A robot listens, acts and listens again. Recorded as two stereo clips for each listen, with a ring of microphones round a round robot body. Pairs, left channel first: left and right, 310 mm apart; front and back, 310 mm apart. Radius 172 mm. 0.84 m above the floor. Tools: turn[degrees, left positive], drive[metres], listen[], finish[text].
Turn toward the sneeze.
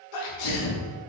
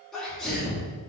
Thought: The sneeze: 90° left.
Action: turn[90]
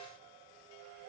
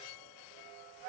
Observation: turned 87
Action: finish[Facing where the sneeze came from. I can't hear it now.]